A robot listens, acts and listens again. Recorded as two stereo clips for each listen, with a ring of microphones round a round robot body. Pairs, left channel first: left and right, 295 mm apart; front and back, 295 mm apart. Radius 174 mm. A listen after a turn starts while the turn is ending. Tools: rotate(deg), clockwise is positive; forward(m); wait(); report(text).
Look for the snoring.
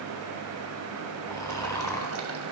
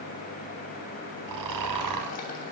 rotate(-170)
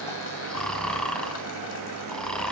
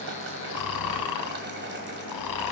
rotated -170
report("Facing the snoring, 1 to 2 m away.")